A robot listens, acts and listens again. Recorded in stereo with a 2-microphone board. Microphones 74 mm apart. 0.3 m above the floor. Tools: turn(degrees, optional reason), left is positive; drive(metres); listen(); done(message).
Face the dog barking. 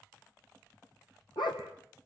turn(degrees=90)
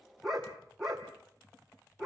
done("Found it: a dog barking, straight ahead, over 4 m away.")